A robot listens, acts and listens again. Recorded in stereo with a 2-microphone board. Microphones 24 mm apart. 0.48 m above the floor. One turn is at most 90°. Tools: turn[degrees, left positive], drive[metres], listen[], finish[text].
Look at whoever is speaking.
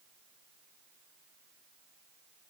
Action: listen[]
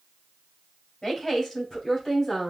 Thought: The woman speaking: about 25° left or 155° left.
Action: turn[25]
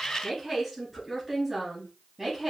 Action: finish[Found it: a woman speaking, straight ahead, 2 to 4 m away.]